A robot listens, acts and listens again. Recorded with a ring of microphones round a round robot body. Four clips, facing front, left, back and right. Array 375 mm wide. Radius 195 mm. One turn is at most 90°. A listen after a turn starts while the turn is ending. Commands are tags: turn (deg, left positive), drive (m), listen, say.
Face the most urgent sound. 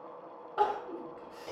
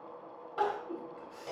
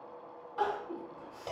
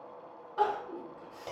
<turn deg="10"/>
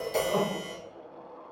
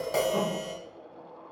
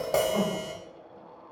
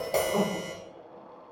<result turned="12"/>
<listen/>
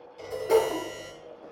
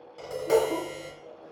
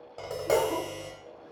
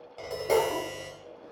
<listen/>
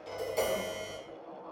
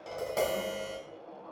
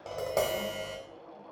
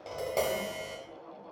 <say>Facing where the crying came from. I can't hear it now.</say>